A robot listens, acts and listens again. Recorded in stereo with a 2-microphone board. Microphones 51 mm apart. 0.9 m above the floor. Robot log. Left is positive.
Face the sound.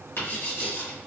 note: The writing: about 60° left or 120° left.
cmd yaw +60
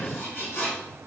note: So it is at 60° left.
cmd yaw +60
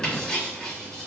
end: Found it: writing, straight ahead.